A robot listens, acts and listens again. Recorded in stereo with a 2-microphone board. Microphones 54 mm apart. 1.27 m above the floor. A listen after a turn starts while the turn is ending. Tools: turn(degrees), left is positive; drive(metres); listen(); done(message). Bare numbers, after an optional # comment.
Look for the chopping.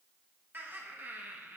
listen()
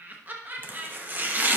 # The chopping: about 35° right or 145° right.
turn(-35)
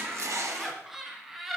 # So it is at 110° right.
turn(-110)
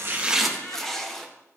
done("Facing the chopping, under 1 m away.")